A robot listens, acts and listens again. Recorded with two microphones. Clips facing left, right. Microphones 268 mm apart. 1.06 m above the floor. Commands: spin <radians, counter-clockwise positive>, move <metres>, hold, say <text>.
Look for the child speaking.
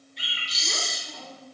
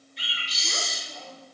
spin 1.57
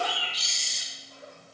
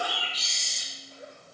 spin -0.44
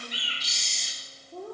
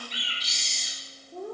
say Facing the child speaking.